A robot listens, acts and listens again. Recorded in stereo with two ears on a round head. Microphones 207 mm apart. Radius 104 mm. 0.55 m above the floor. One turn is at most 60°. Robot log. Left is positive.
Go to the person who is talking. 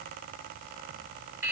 cmd idle
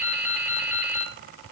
cmd idle
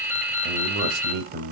note: The man speaking: about 45° right or 135° right.
cmd yaw -45
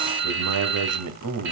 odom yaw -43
note: So it is at 90° right.
cmd yaw -60
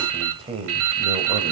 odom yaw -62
note: The man speaking is now 25° right.
cmd yaw -25
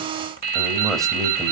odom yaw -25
cmd fwd 1.0
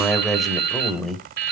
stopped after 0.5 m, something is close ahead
end: Blocked. The man speaking is further on, straight ahead.